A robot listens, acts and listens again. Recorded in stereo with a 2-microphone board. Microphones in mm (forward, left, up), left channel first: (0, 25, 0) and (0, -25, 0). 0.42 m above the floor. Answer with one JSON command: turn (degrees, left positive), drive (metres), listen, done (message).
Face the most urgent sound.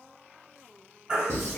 {"turn": -20}
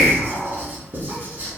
{"listen": true}
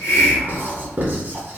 {"listen": true}
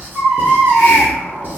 {"done": "Facing the baby crying, 1 to 2 m away."}